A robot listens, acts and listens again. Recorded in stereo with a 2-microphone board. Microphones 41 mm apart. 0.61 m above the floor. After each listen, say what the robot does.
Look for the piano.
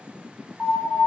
Turn 30° right.
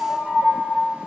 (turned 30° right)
Turn 150° right.
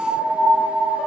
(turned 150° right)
Facing the piano, 1 to 2 m away.